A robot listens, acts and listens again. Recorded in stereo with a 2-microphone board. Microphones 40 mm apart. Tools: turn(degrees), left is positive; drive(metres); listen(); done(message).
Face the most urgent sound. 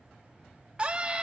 turn(degrees=-30)
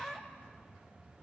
done("Facing the scream.")